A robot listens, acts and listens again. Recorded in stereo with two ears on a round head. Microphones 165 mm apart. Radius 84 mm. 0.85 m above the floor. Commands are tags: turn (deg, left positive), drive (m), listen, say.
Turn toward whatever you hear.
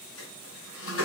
<turn deg="90"/>
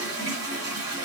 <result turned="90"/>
<turn deg="-15"/>
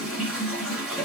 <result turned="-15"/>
<say>Found it: a toilet flushing, straight ahead.</say>